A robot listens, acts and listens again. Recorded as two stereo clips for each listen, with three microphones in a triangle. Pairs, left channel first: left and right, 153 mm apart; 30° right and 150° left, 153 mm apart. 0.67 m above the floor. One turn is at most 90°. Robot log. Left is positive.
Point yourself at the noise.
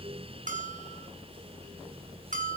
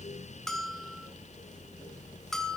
note: The bell: 120° right.
cmd yaw -90
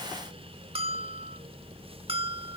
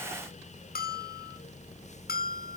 note: The bell is now 40° right.
cmd yaw -40
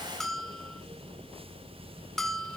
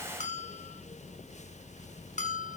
end: Facing the bell, under 1 m away.